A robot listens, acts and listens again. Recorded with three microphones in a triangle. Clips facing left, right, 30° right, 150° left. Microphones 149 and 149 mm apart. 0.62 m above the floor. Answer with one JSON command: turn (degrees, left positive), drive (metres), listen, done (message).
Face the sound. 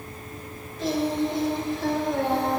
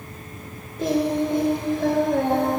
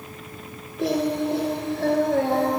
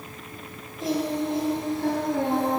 {"turn": -50}
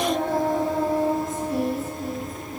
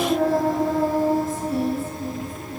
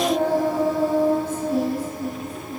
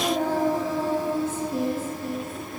{"done": "Found it: singing, straight ahead."}